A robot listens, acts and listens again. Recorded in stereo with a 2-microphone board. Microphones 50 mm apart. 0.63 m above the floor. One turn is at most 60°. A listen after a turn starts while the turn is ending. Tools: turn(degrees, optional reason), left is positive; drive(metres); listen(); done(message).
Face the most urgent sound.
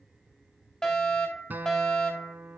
turn(degrees=30)
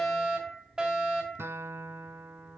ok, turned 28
turn(degrees=-20, reason="So it is at 20° right.")
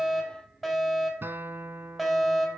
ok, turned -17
done("Found it: a fire alarm, straight ahead, over 4 m away.")